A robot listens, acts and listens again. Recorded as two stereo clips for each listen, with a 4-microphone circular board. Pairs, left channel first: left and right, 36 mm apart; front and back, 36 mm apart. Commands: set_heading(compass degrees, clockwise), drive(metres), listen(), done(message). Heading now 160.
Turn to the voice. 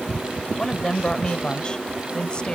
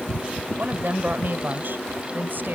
set_heading(10)
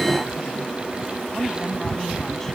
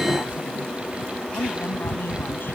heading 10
listen()
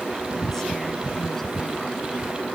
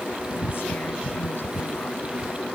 listen()
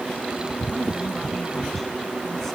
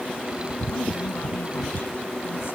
done("I heard a woman speaking from this way, but can't make it out now.")